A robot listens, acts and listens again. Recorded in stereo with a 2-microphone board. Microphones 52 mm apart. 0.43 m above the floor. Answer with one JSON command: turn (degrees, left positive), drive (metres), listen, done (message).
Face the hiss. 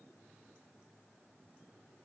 {"listen": true}
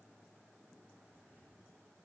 {"listen": true}
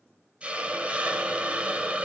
{"turn": -20}
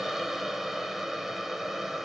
{"done": "Found it: a hiss, straight ahead."}